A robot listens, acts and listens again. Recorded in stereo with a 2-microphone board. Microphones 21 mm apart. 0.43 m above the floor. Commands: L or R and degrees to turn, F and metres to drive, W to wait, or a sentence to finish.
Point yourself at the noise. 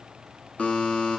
L90
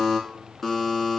L10
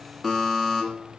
Found it: a buzzer, straight ahead.